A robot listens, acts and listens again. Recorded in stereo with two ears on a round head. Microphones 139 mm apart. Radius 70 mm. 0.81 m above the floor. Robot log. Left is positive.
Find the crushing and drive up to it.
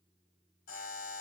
cmd idle
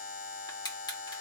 note: The crushing: about 25° left or 155° left.
cmd yaw +25
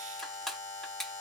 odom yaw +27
cmd fwd 1.0
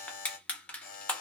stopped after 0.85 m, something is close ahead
note: The crushing is now 10° left.
cmd yaw +10
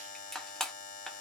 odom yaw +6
end: I am next to the crushing.